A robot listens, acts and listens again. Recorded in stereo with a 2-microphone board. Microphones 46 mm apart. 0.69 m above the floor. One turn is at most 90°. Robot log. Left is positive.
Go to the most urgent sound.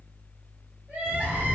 note: The crying: about 35° right or 145° right.
cmd yaw -35
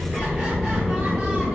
cmd idle
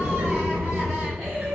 cmd fwd 1.0
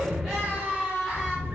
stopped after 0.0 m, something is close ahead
end: Blocked. The crying is further on, straight ahead.